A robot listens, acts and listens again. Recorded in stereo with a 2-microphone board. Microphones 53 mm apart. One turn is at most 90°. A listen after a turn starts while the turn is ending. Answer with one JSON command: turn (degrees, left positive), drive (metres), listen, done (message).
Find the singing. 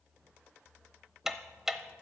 {"listen": true}
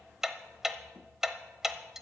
{"listen": true}
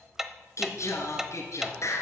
{"turn": 65}
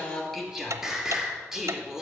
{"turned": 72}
{"turn": -10}
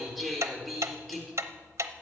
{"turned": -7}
{"done": "Found it: singing, straight ahead."}